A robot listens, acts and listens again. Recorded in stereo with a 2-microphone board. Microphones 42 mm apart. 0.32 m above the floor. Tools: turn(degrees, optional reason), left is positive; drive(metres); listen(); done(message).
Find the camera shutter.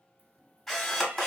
turn(degrees=30)
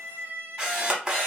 turn(degrees=-20, reason="So it is at 20° right.")
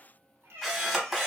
done("Found it: a camera shutter, straight ahead, under 1 m away.")